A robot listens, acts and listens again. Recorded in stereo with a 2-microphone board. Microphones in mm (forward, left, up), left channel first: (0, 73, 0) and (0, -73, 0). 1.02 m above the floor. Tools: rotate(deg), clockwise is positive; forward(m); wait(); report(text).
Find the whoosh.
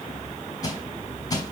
wait()
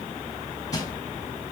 wait()
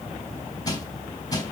report("I can't make out a whoosh, only crushing.")